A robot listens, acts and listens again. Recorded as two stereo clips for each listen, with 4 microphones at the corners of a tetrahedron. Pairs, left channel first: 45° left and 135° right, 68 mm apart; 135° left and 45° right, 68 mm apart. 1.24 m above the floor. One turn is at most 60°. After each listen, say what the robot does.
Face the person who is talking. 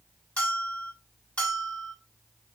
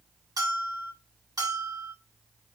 Keep listening.
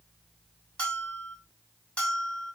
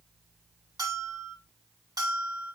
Keep listening.
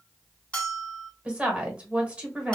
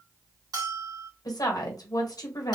Turn 60° left.
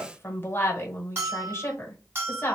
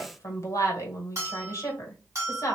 Turn 60° left.
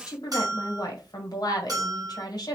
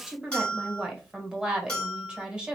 Turn 30° left.
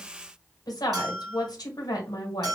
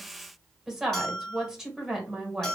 Turn 40° left.
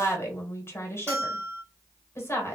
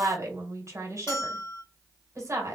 Found it: a woman speaking, straight ahead.